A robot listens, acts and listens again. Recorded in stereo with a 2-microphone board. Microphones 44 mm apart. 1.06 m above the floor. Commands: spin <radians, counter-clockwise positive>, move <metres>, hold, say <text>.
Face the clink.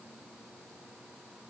hold
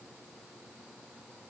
hold
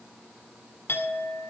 spin 0.96
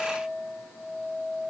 spin 1.22
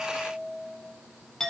spin 0.26
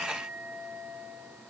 say Facing the clink, 2 to 4 m away.